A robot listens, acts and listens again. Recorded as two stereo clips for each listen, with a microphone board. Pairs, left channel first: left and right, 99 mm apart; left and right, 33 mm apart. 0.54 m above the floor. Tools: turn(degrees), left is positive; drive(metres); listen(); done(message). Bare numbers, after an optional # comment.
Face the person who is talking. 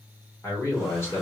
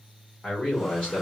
# The man speaking: about 25° left or 155° left.
turn(25)
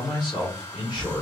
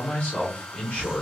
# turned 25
# So it is at 125° left.
turn(125)
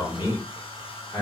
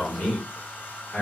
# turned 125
# The man speaking is now 35° left.
turn(35)
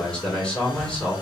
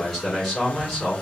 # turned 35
# The man speaking is now 10° left.
turn(10)
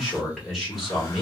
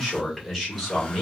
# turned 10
done("Found it: a man speaking, straight ahead.")